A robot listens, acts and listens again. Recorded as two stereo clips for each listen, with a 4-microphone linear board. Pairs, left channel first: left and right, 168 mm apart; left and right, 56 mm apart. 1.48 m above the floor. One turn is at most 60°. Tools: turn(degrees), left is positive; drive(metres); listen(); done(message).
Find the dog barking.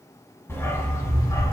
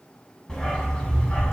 turn(degrees=20)
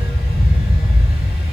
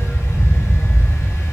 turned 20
turn(degrees=60)
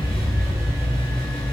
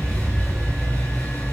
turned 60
turn(degrees=40)
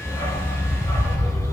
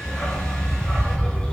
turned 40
turn(degrees=20)
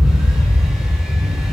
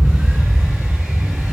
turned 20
done("Facing the dog barking.")